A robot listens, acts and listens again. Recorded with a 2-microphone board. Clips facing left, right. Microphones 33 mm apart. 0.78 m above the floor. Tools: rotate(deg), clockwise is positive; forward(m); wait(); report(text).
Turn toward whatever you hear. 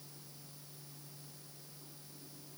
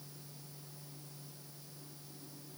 wait()
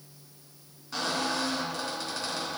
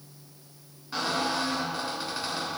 rotate(15)
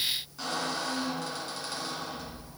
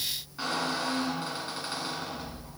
rotate(150)
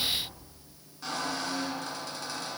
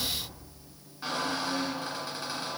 rotate(25)
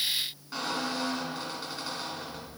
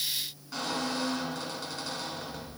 rotate(-15)
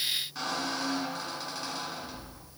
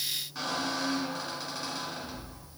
report("Facing the squeak.")